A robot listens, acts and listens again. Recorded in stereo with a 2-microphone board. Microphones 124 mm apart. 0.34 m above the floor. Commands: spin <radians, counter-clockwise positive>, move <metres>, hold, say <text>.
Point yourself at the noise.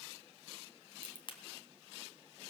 spin 0.79
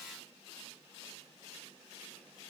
hold
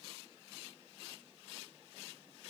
say I heard a crack, but can't make it out now. It was about straight ahead or 90° left.